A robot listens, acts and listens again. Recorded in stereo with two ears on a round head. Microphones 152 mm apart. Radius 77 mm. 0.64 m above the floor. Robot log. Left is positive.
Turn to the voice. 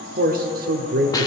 note: The man speaking: about 60° right or 120° right.
cmd yaw -60
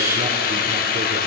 cmd idle
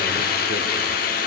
cmd idle
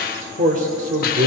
note: So it is at 50° right.
cmd yaw -50
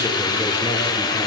cmd idle
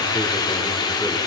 cmd idle
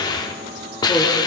end: I heard a man speaking from this way, but can't make it out now.